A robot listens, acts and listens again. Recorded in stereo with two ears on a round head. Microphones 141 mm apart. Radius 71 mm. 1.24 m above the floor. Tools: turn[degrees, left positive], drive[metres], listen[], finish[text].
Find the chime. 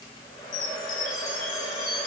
Thought: The chime: about 65° left or 115° left.
Action: turn[65]
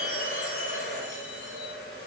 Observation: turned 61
Action: listen[]
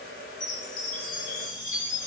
Thought: So it is at 50° left.
Action: turn[50]
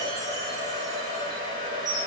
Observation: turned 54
Action: finish[Facing the chime.]